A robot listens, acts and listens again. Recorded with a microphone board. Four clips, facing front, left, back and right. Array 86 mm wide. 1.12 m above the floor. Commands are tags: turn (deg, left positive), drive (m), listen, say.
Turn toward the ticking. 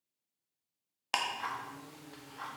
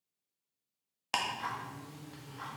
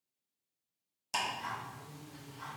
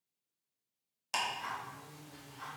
<turn deg="30"/>
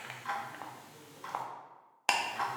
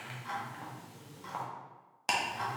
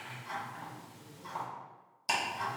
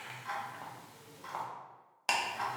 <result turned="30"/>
<say>Facing the ticking.</say>